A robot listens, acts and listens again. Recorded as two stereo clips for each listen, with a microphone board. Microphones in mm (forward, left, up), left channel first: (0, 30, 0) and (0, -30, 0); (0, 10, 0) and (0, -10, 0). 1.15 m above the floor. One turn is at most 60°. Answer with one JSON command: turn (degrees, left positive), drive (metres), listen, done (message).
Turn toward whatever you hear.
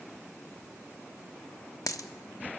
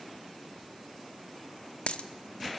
{"turn": 60}
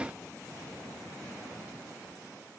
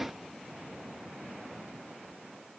{"listen": true}
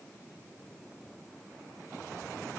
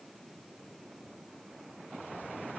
{"done": "I heard a dropped coin, but can't make it out now. It was about 10° left or 50° left."}